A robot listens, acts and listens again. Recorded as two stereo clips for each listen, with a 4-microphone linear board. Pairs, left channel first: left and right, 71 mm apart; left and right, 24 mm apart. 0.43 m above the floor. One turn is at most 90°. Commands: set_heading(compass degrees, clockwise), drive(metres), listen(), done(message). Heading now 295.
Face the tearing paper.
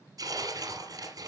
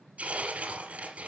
set_heading(355)
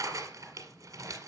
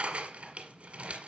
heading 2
set_heading(52)
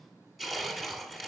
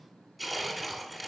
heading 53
done("Found it: tearing paper, straight ahead.")